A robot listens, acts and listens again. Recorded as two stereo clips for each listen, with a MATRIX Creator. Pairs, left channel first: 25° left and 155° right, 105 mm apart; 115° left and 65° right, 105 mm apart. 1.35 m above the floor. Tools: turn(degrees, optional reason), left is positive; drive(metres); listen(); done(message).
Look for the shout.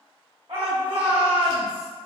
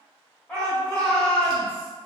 turn(degrees=-170, reason="The shout: 170° right.")
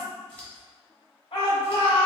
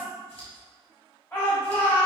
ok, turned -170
turn(degrees=40, reason="The shout is now 40° left.")
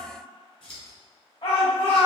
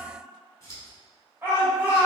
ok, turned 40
done("Found it: a shout, straight ahead, 1 to 2 m away.")